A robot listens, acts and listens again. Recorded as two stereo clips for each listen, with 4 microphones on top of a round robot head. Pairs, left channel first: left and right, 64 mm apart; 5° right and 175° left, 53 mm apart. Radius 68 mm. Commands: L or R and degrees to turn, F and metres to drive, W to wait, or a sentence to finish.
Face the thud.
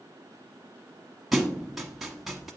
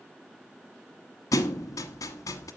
Found it: a thud, straight ahead.